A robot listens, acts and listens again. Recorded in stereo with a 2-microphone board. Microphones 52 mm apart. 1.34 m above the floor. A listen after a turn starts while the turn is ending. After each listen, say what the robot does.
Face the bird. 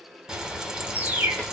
Turn 40° right.
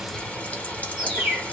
Turn 10° right.
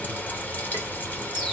Keep listening.
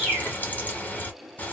Found it: a bird, straight ahead, 1 to 2 m away.